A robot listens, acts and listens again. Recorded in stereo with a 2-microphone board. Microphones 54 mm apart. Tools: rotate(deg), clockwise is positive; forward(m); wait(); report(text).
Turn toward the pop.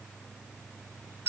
wait()
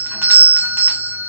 wait()
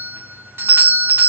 report("I can't make out a pop to turn to.")